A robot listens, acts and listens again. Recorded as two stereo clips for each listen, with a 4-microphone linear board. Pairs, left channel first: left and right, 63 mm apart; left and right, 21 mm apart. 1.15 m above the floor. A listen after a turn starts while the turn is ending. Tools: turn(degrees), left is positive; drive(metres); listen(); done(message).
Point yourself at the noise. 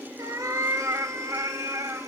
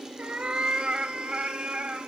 turn(degrees=-60)
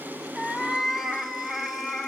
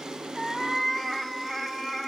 done("Found it: a cat meowing, straight ahead.")